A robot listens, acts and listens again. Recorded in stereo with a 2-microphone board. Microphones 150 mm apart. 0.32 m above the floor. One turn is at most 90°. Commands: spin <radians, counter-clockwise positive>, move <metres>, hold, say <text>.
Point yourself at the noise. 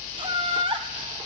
spin -0.70
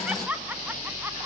spin -0.17
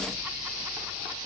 hold
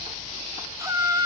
spin -0.44
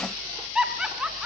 say Facing the laughter.